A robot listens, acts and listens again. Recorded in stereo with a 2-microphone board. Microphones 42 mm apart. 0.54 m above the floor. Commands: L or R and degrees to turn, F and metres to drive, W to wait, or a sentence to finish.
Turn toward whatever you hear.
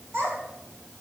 R70
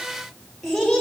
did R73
L10
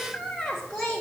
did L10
L15
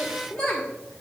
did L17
L10
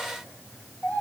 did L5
L25
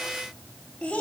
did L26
L15
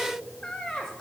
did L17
Found it: a child speaking, straight ahead, 1 to 2 m away.